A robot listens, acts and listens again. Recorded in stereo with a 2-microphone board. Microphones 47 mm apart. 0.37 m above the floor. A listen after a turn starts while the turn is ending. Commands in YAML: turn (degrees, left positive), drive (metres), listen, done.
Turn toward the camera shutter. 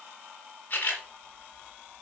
turn: 40
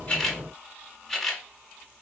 done: "Found it: a camera shutter, straight ahead."